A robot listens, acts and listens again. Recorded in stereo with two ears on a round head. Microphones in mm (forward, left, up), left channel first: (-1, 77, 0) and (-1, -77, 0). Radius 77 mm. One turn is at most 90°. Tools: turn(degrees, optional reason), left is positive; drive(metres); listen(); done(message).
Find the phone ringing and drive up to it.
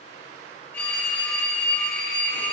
turn(degrees=30)
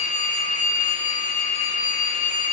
turn(degrees=90, reason="So it is at 135° left.")
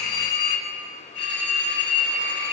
turn(degrees=70, reason="The phone ringing is now 70° left.")
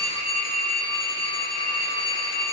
turn(degrees=30, reason="The phone ringing is now 30° left.")
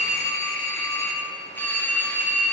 turn(degrees=10, reason="The phone ringing is now 10° left.")
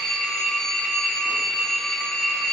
drive(metres=1.0)
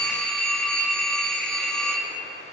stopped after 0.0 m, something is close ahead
done("Blocked. The phone ringing is further on, straight ahead.")